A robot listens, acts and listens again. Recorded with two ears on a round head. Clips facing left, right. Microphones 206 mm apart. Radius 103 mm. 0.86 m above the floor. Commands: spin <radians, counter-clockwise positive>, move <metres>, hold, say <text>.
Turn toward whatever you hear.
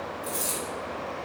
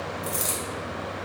spin -0.35
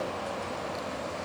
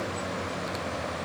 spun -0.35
hold
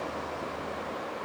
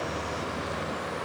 say I heard a dropped coin, but can't make it out now. It was about straight ahead or 140° right.